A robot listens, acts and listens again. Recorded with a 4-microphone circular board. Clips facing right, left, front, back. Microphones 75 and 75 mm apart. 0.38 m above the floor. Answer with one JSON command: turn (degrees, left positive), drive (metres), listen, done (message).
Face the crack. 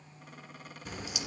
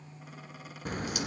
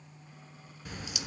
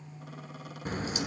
{"turn": 130}
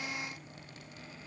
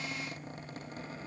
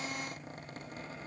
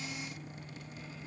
{"done": "Facing where the crack came from. I can't hear it now."}